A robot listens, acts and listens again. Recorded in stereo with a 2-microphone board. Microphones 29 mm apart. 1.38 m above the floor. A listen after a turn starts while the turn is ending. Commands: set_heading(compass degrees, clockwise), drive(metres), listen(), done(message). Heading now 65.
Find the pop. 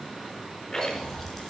set_heading(35)
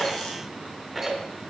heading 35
listen()
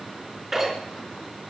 done("I heard a pop, but can't make it out now. It was about 20° right or 140° left.")